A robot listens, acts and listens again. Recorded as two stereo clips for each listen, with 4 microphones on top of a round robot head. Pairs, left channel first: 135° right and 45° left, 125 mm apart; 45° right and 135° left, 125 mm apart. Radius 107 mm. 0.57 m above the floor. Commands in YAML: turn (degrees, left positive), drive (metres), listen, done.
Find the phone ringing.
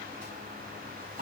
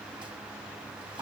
listen: true
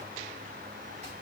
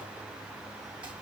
listen: true
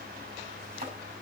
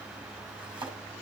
done: "I can't make out a phone ringing, only chopping."